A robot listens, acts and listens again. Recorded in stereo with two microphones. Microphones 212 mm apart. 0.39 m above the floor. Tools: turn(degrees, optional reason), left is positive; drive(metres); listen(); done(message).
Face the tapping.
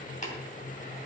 turn(degrees=35, reason="The tapping: about 35° left or 145° left.")
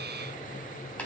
listen()
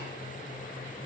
listen()
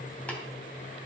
done("I heard tapping, but can't make it out now. It was about straight ahead or 110° left.")